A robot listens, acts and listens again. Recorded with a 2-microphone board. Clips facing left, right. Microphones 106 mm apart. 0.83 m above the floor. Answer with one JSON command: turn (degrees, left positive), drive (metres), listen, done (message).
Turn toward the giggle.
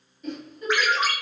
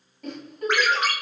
{"turn": -70}
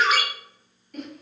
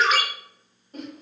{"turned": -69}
{"turn": -30}
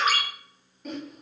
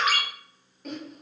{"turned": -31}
{"done": "Facing the giggle."}